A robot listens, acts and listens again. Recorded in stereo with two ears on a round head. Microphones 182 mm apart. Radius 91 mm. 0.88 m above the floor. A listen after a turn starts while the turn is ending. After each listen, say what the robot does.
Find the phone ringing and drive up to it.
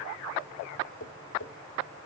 Keep listening.
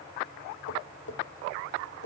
Keep listening.
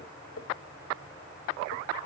I can't make out a phone ringing to turn to.